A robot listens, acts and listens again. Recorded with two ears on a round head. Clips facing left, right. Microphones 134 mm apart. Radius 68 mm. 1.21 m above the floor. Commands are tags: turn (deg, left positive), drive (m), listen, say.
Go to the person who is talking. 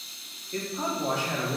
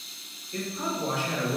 <turn deg="55"/>
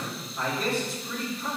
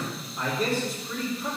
<drive m="1.0"/>
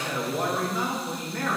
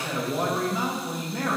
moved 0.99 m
<turn deg="-10"/>
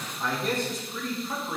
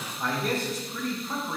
<drive m="1.0"/>
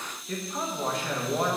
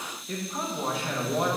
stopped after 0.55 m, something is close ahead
<say>I am next to the man speaking.</say>